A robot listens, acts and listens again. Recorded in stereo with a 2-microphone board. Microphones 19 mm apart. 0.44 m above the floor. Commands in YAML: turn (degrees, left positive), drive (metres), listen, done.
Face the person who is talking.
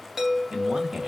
turn: -35
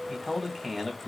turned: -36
done: "Found it: a man speaking, straight ahead, 1 to 2 m away."